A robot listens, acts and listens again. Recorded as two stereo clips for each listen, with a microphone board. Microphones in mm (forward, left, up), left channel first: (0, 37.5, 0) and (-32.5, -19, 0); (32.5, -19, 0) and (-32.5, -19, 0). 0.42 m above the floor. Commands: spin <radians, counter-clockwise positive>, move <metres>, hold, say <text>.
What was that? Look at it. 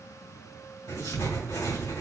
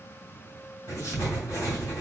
spin 0.70
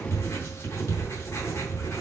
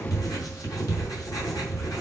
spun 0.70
spin 0.26
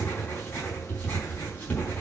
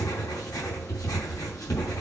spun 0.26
say Found it: writing, straight ahead.